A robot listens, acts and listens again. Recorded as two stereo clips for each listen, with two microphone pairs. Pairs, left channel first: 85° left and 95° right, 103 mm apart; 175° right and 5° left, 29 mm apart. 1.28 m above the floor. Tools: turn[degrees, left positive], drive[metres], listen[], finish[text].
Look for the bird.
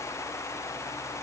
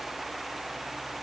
Action: listen[]
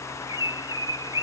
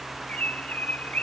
Thought: The bird: 145° right.
Action: turn[-145]
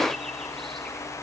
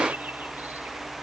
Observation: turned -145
Action: listen[]
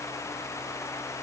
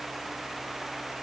Action: listen[]
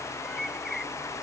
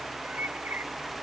Action: finish[Found it: a bird, straight ahead.]